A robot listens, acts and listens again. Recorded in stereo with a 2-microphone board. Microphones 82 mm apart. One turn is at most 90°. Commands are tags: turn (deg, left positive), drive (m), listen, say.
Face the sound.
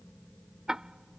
<turn deg="-30"/>
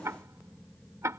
<turn deg="-90"/>
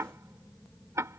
<turn deg="-40"/>
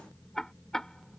<turn deg="10"/>
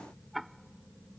<say>Facing the ticking.</say>